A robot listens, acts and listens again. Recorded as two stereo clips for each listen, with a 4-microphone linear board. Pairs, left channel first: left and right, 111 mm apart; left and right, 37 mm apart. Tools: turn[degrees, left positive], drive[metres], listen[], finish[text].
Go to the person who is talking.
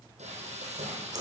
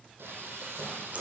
Action: listen[]
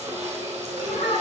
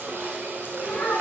Action: turn[90]
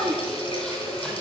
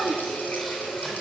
Action: drive[1.0]
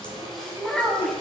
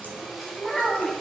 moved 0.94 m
Action: drive[1.0]
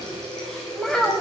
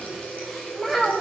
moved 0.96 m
Action: drive[1.0]
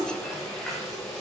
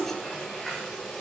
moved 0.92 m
Action: listen[]
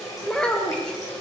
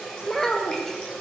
Thought: The child speaking is now 10° left.
Action: turn[10]
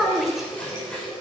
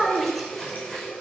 Action: drive[1.0]
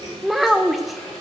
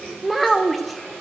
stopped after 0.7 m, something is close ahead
Action: finish[Arrived at the child speaking, straight ahead.]